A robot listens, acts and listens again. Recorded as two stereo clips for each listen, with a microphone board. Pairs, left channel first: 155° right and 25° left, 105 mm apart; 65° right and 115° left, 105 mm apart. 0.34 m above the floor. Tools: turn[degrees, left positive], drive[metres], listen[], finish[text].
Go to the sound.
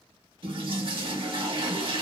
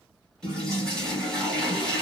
Thought: The toilet flushing: 15° left.
Action: turn[15]
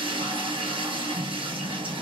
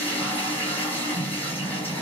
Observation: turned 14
Action: drive[1.0]
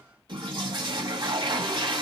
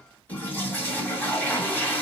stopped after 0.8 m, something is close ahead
Action: finish[I am next to the toilet flushing.]